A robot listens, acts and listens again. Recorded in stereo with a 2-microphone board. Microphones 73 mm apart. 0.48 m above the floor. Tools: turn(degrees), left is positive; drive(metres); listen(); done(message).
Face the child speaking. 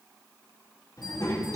turn(degrees=60)
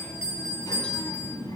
turn(degrees=65)
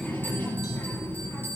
turn(degrees=30)
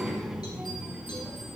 turn(degrees=-10)
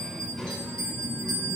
done("Facing the child speaking.")